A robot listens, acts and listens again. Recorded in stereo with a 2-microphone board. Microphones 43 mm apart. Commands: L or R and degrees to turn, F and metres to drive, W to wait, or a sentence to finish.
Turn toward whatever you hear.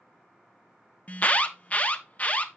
L35
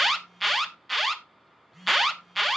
Facing the alarm.